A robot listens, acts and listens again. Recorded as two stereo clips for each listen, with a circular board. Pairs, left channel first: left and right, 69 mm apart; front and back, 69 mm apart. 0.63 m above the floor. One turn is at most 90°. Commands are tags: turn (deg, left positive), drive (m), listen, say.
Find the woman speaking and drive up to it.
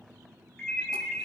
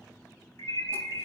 <listen/>
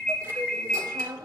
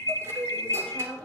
<turn deg="-75"/>
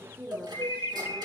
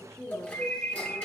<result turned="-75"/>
<turn deg="-15"/>
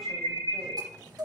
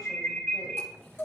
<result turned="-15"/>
<listen/>
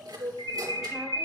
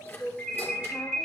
<listen/>
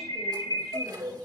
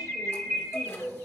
<say>Facing where the woman speaking came from. I can't hear it now. I did not reach it.</say>